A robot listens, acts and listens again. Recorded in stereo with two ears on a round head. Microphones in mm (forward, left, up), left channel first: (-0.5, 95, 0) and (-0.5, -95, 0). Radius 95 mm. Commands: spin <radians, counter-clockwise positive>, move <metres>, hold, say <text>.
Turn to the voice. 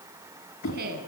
spin -0.87
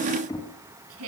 spin -1.40
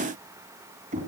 hold
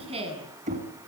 spin -0.52
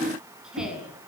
say Found it: a woman speaking, straight ahead, over 4 m away.